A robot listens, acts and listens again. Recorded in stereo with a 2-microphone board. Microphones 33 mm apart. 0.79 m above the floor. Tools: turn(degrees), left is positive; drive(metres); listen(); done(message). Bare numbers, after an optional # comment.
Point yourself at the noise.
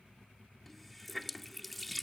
turn(30)
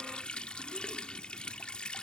# So it is at 150° left.
turn(150)
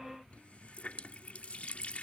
# The running tap is now 45° left.
turn(45)
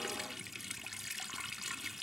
done("Facing the running tap.")